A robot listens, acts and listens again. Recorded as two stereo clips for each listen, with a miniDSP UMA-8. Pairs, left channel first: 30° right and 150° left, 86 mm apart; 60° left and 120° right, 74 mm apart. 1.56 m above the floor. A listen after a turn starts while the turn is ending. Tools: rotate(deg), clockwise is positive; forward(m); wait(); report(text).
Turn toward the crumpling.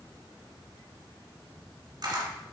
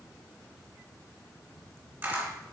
wait()
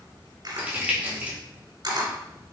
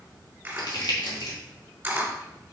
rotate(-80)
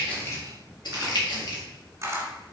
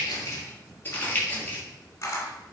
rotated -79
report("Found it: crumpling, straight ahead.")